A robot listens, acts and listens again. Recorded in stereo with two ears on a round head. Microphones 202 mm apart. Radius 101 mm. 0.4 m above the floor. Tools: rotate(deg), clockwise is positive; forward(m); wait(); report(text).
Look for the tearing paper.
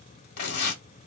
rotate(-45)
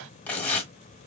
report("Facing the tearing paper, 1 to 2 m away.")